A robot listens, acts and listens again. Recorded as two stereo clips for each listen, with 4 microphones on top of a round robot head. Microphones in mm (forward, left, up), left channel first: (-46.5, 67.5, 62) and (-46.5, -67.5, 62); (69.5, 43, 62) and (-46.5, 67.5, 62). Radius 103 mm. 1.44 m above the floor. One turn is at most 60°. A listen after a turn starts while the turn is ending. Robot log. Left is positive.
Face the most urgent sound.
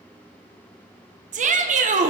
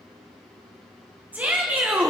note: The shout: 115° right.
cmd yaw -60
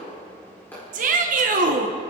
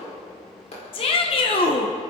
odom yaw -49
note: The shout is now 60° right.
cmd yaw -60
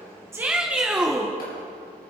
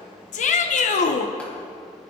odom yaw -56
end: Found it: a shout, straight ahead.